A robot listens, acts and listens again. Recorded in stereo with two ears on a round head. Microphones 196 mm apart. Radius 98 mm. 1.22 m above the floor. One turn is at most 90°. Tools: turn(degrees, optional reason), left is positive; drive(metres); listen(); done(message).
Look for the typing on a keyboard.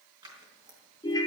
listen()
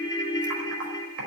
turn(degrees=-90)
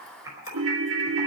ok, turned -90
turn(degrees=-15, reason="So it is at 15° right.")
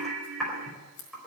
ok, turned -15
done("Facing the typing on a keyboard.")